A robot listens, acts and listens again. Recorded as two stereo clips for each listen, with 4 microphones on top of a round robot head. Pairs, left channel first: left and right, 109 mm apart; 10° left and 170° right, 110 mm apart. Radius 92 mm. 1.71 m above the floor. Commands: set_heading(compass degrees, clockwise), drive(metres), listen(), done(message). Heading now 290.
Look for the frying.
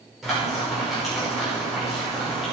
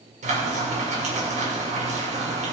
set_heading(110)
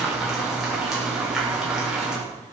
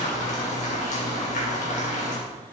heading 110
done("Found it: frying, straight ahead.")